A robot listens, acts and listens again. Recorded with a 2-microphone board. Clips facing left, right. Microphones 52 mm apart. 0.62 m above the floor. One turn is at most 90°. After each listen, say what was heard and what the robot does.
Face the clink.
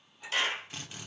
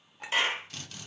The clink: about 60° right or 120° right. Turn 60° right.
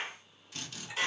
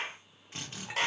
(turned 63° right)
Keep listening.
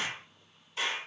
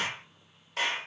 Keep listening.
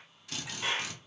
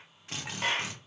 I heard a clink, but can't make it out now. It was about straight ahead or 55° right.